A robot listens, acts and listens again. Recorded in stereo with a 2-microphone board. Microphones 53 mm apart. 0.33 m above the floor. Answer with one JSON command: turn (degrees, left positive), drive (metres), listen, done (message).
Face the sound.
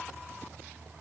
{"listen": true}
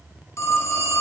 {"turn": 65}
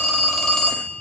{"done": "Found it: a phone ringing, straight ahead, 2 to 4 m away."}